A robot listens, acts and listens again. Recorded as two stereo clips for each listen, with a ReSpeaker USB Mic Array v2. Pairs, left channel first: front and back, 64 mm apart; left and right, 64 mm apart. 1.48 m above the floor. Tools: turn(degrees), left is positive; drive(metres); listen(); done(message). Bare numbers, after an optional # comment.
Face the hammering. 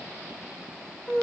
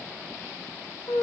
listen()
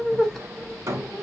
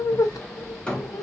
# The hammering: 160° left.
turn(160)
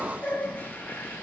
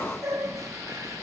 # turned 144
# Nothing new. It was at 15° left.
turn(15)
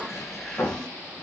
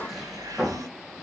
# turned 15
done("Found it: hammering, straight ahead.")